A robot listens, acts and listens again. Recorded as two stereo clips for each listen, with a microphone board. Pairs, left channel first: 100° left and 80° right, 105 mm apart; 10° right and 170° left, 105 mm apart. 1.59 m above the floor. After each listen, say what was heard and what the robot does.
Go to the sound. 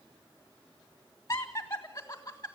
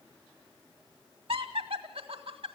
The laughter: 160° left. Turn 160° left.
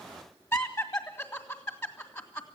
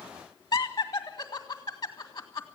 The laughter is now 45° left. Turn 45° left.
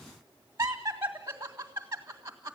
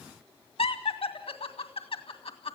The laughter is now 15° right. Turn 15° right.
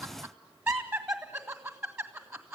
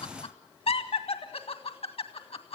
Drive 1.0 m forward.
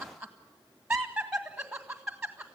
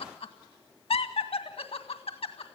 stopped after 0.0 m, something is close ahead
Something is in my way. I am facing the laughter but have not reached it.